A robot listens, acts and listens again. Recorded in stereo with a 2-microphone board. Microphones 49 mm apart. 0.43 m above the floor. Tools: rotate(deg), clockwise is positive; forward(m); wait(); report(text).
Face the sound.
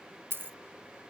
rotate(45)
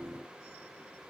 wait()
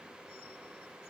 report("I heard a dropped coin, but can't make it out now. It was about straight ahead or 90° right.")